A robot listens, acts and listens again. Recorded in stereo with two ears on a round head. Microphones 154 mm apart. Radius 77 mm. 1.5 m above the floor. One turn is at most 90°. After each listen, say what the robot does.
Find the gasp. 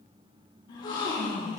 Turn 30° left.
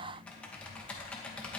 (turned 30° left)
Keep listening.
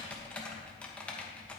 I heard a gasp, but can't make it out now. It was about straight ahead or 120° left.